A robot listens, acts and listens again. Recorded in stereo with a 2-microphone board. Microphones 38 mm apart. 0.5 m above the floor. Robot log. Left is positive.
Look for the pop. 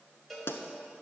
note: The pop: about 70° left or 110° left.
cmd yaw +70
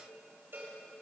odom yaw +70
cmd idle
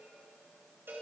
end: I heard a pop, but can't make it out now. It was about straight ahead or 40° left.